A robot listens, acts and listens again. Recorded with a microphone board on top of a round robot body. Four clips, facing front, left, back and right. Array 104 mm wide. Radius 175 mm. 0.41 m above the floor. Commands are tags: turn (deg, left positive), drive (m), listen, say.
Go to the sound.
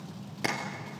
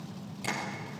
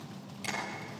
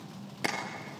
<turn deg="-40"/>
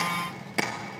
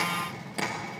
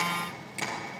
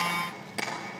<drive m="1.0"/>
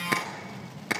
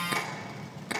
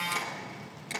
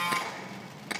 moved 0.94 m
<drive m="1.0"/>
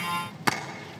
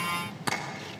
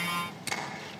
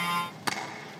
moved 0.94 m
<drive m="1.0"/>
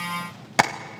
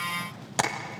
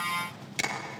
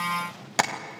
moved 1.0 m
<turn deg="-10"/>
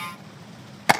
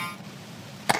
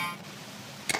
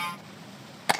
<drive m="1.0"/>
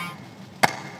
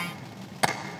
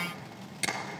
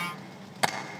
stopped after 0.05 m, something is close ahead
<say>Arrived at the tapping, straight ahead.</say>